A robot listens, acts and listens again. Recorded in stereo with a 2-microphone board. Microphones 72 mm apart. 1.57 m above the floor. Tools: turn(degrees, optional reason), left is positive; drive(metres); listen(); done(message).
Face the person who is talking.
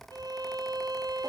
listen()
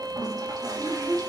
turn(degrees=-45, reason="The child speaking: about 45° right or 135° right.")
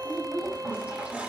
turn(degrees=-90, reason="So it is at 90° right.")
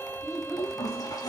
done("Facing the child speaking, over 4 m away.")